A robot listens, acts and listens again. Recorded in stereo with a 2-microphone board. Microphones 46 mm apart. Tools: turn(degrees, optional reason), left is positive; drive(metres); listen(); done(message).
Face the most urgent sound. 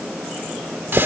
listen()
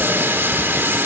listen()
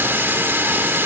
done("I can't make out anything urgent, only a running tap.")